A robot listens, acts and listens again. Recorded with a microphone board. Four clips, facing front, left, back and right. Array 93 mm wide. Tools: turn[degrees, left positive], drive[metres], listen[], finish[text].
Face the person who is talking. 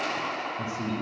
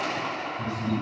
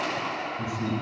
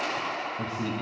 Thought: The man speaking: 65° right.
Action: turn[-65]
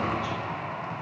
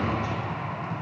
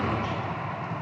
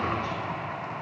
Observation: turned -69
Action: finish[Facing the man speaking.]